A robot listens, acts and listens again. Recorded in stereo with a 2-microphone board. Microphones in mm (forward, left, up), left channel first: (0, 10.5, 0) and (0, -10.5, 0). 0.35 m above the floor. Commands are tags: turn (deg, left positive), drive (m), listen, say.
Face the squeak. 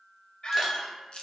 <turn deg="50"/>
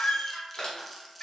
<turn deg="80"/>
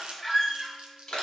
<turn deg="10"/>
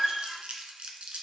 <say>Facing the squeak, under 1 m away.</say>